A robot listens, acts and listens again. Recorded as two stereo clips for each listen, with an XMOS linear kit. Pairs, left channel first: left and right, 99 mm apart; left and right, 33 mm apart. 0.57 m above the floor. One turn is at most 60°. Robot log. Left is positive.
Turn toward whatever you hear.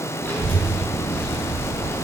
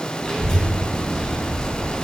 note: The child speaking: about 20° left or 160° left.
cmd yaw +20
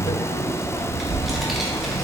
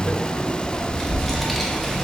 end: Found it: a child speaking, straight ahead.